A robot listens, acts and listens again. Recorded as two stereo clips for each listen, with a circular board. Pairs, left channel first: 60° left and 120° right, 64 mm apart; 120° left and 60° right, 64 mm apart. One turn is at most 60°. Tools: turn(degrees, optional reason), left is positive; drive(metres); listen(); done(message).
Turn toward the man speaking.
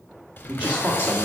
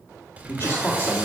turn(degrees=60, reason="The man speaking: 175° left.")
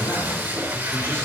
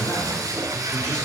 turn(degrees=60, reason="Nothing new. It was at 115° left.")
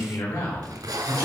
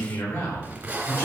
turn(degrees=60, reason="The man speaking is now 60° left.")
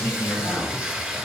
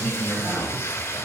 turn(degrees=-20, reason="The man speaking is now 20° right.")
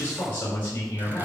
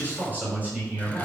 done("Found it: a man speaking, straight ahead, over 4 m away.")